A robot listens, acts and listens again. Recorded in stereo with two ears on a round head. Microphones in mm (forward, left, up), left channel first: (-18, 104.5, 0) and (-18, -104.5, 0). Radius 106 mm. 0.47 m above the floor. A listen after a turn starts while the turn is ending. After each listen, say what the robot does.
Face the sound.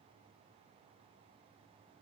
Keep listening.
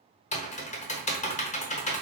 Turn 30° left.
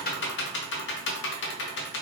Turn 110° left.
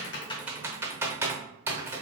Turn 10° right.
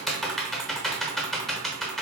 Facing the typing on a keyboard, under 1 m away.